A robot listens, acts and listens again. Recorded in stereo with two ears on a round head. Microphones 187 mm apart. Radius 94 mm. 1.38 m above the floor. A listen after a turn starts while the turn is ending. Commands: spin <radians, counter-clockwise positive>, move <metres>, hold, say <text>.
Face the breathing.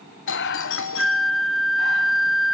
spin 0.96
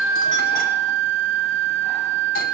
hold
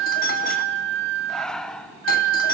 say Facing the breathing.